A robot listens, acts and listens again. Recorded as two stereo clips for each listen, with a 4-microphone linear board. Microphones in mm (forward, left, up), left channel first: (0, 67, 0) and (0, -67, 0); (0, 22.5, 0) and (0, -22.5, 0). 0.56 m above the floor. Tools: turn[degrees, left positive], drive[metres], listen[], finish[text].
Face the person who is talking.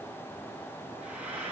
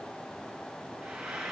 Action: listen[]
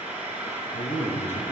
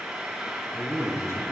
Action: turn[90]
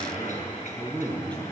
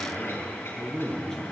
Thought: So it is at 10° left.
Action: turn[10]
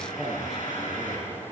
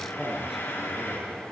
Action: finish[Facing the man speaking, over 4 m away.]